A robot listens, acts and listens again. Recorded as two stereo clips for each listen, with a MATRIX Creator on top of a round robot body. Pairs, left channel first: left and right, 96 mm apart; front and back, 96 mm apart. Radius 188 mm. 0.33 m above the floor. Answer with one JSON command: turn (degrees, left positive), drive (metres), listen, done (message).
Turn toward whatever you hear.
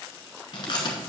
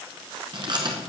{"turn": 135}
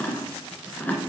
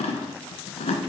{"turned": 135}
{"turn": 15}
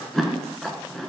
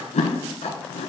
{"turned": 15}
{"done": "Found it: chewing, straight ahead, under 1 m away."}